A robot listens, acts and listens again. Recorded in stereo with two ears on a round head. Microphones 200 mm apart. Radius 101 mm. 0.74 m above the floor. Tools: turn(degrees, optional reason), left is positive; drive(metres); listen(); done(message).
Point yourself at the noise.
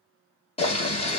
turn(degrees=30, reason="The boiling: about 30° left or 150° left.")
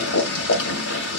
turn(degrees=125, reason="So it is at 125° left.")
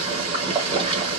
turn(degrees=-25, reason="The boiling is now 25° right.")
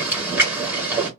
turn(degrees=-10, reason="The boiling is now 10° right.")
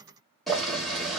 done("Found it: boiling, straight ahead, 1 to 2 m away.")